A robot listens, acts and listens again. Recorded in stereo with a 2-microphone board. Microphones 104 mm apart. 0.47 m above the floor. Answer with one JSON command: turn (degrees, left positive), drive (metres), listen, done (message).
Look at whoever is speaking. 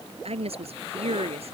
{"turn": -70}
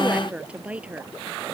{"turn": -10}
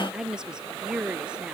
{"turn": -10}
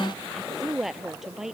{"done": "Found it: a woman speaking, straight ahead."}